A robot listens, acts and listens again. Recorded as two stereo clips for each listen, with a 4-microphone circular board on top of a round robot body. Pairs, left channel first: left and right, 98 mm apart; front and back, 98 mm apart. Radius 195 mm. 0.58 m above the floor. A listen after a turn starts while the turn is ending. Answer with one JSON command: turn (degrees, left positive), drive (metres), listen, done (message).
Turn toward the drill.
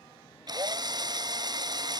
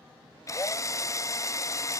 {"turn": -55}
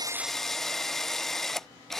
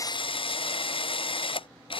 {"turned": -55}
{"done": "Facing the drill."}